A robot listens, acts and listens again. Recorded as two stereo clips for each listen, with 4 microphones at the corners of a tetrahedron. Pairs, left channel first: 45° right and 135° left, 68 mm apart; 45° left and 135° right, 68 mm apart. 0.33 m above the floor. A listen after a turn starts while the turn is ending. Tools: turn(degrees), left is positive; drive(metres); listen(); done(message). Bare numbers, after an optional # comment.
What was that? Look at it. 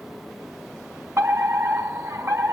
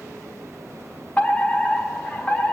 # The fire alarm: 110° left.
turn(110)
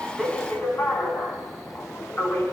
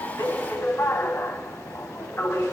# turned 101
# The fire alarm is now 10° left.
turn(10)
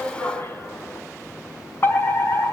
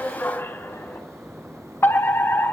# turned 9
done("Facing the fire alarm, over 4 m away.")